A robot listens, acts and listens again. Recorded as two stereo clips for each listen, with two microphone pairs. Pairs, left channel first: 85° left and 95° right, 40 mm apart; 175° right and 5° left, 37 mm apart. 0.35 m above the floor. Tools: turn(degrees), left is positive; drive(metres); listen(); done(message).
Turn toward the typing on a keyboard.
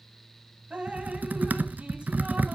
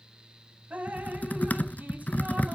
turn(degrees=-140)
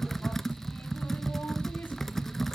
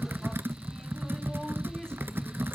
done("Facing the typing on a keyboard.")